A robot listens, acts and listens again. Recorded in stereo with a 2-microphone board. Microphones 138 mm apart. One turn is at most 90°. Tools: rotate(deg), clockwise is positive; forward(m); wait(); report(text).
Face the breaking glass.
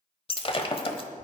rotate(-40)
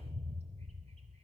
wait()
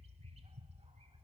report("I heard breaking glass, but can't make it out now. It was about straight ahead or 100° left.")